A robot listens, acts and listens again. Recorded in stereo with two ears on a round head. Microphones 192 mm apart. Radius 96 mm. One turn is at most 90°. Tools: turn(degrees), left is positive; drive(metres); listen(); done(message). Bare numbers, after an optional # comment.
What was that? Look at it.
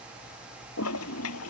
# The toilet flushing: about 70° left or 110° left.
turn(70)
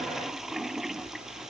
done("Found it: a toilet flushing, straight ahead.")